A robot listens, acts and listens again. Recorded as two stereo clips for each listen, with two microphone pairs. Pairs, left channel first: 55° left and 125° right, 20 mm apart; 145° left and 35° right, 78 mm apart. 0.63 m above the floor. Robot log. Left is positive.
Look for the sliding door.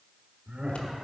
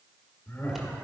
cmd idle
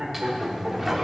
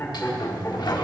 note: The sliding door: 155° left.
cmd yaw +155
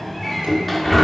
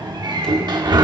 note: The sliding door is now 30° right.
cmd yaw -30
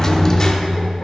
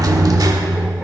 end: Facing the sliding door, under 1 m away.